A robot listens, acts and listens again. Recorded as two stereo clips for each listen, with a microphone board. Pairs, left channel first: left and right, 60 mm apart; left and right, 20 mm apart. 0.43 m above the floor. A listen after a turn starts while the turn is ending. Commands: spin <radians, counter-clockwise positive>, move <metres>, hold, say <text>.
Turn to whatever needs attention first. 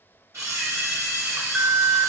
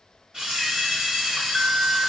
spin -0.35
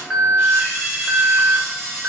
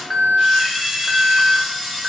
say Facing the alarm.